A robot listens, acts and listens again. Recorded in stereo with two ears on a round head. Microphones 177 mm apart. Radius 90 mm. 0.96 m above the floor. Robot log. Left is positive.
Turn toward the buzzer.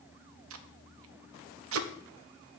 cmd idle
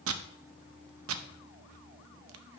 cmd idle
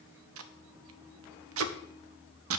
end: I can't make out a buzzer, only tape being pulled.